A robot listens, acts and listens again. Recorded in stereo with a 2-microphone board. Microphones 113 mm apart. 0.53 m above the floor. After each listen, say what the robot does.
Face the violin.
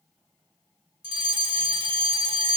Keep listening.
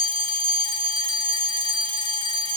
Keep listening.
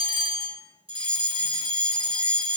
I can't make out a violin, only a fire alarm.